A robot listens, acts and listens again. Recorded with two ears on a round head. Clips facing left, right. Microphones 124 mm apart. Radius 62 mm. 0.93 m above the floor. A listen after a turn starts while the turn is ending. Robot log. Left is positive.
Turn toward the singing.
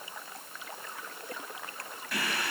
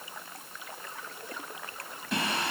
note: The singing: about 20° right or 160° right.
cmd yaw -20
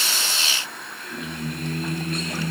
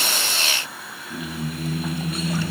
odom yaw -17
end: Facing the singing.